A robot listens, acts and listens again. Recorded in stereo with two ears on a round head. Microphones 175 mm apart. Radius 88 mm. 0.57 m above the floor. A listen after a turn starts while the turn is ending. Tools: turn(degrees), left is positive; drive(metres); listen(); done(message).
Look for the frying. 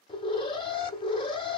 listen()
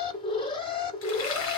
turn(degrees=75)
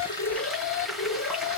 done("Facing the frying.")